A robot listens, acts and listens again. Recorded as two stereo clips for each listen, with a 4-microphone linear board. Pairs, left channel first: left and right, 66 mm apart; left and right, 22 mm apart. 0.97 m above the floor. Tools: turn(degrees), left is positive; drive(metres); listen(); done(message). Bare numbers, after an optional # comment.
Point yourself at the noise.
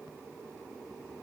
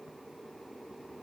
listen()
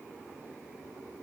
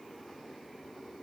listen()
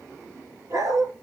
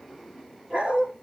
# The dog barking: about 55° right or 125° right.
turn(-55)
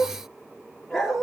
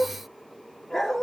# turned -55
done("Found it: a dog barking, straight ahead, over 4 m away.")